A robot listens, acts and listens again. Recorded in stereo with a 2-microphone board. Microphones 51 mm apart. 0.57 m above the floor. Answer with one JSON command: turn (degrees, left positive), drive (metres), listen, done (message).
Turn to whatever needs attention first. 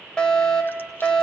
{"turn": 15}
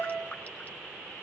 {"turn": 150}
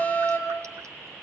{"turn": 35}
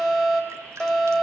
{"done": "Found it: a fire alarm, straight ahead."}